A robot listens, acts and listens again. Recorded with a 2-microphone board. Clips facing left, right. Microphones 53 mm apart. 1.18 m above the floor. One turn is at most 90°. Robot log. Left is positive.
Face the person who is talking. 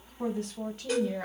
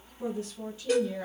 note: The woman speaking: about 55° left or 125° left.
cmd yaw +55
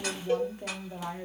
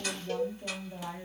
note: So it is at 70° left.
cmd yaw +70
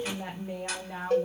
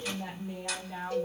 note: The woman speaking is now 55° left.
cmd yaw +55
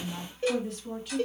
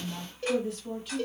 end: Facing the woman speaking, 1 to 2 m away.